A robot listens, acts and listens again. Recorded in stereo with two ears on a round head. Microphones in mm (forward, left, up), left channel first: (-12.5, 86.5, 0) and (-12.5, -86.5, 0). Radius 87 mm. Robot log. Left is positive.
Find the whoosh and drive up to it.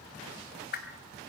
note: The whoosh: about 55° left or 125° left.
cmd yaw +55
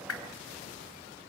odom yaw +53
note: So it is at 75° left.
cmd yaw +75
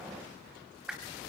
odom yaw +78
cmd fwd 1.0
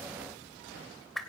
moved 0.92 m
cmd fwd 1.0
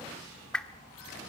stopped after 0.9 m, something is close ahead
end: Arrived at the whoosh, straight ahead.